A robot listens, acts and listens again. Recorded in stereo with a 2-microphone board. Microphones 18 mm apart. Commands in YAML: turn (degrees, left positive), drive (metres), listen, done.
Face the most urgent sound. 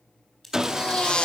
turn: 50
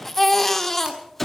turn: 15
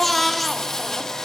done: "Facing the baby crying, 1 to 2 m away."